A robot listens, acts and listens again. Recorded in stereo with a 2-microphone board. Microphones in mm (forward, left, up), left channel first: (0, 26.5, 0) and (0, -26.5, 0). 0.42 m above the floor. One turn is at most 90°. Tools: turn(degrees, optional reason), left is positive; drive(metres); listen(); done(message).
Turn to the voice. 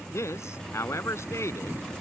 turn(degrees=60, reason="The man speaking: about 60° left or 120° left.")
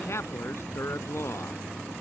turn(degrees=60, reason="So it is at 60° left.")
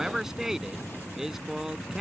done("Found it: a man speaking, straight ahead.")